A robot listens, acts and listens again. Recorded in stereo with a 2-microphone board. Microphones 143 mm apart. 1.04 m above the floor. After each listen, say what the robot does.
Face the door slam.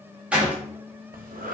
Turn 30° right.
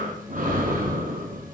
Keep listening.
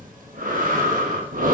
I heard a door slam, but can't make it out now. It was about 20° left or 140° right.